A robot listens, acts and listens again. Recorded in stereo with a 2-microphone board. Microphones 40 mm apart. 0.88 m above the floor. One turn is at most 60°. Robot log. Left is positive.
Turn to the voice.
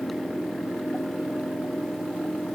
cmd idle
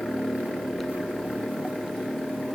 cmd idle
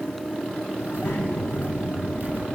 note: The child speaking: about 60° left or 120° left.
cmd yaw +60
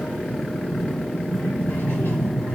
note: So it is at 60° left.
cmd yaw +60
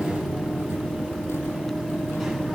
end: Facing the child speaking, over 4 m away.